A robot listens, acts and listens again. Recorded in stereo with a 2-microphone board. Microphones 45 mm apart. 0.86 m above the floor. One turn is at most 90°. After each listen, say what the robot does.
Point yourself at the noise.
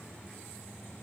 Keep listening.
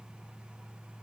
Keep listening.
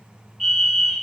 Turn 30° left.
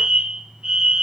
Turn 25° right.
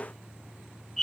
Found it: a fire alarm, straight ahead.